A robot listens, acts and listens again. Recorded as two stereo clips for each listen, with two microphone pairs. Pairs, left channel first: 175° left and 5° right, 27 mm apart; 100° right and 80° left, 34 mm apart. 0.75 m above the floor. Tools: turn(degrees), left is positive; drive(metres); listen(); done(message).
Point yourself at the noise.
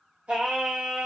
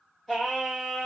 turn(degrees=-25)
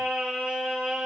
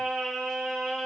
turn(degrees=-25)
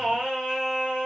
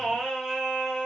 turn(degrees=-15)
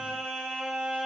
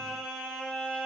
turn(degrees=-20)
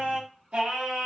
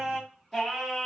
turn(degrees=-20)
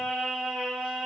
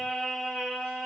done("Found it: singing, straight ahead, 1 to 2 m away.")